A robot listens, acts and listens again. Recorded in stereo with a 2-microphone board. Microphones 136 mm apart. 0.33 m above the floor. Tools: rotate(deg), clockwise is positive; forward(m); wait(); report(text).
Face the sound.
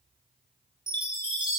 rotate(35)
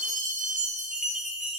rotate(110)
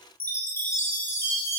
rotate(-15)
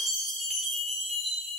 report("Found it: a chime, straight ahead, 2 to 4 m away.")